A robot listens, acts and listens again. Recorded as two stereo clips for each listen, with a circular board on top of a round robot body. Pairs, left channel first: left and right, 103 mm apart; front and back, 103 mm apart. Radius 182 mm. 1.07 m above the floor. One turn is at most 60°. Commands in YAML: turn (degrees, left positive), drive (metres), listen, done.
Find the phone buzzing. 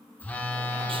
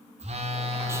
turn: 60
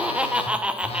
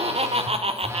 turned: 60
turn: 60
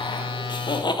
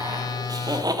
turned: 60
turn: 55
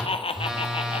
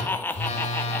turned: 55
done: "Facing the phone buzzing."